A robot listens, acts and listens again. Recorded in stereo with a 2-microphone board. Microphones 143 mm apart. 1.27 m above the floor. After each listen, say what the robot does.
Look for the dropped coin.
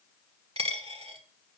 Turn 40° right.
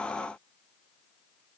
Keep listening.
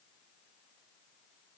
I heard a dropped coin, but can't make it out now. It was about straight ahead or 100° right.